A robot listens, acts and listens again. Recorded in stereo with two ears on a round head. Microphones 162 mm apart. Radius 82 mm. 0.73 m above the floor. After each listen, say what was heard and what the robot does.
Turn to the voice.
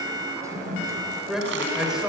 Turn 30° right.
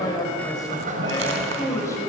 So it is at 15° left. Turn 15° left.
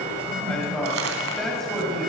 Found it: a man speaking, straight ahead.